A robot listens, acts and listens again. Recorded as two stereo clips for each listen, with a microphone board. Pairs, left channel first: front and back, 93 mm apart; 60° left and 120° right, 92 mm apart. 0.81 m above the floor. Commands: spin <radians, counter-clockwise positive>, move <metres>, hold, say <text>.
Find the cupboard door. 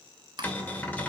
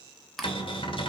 spin 1.31
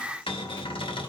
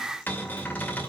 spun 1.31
spin -0.17
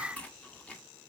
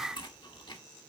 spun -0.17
hold
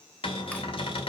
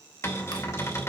say Found it: a cupboard door, straight ahead.